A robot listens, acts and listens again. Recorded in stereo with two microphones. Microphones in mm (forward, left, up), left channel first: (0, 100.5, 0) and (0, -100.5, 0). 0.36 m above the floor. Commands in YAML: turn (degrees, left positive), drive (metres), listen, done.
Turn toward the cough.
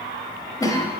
turn: 20
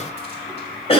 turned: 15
turn: 150
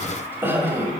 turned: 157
turn: -15
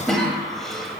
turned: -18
done: "Found it: a cough, straight ahead."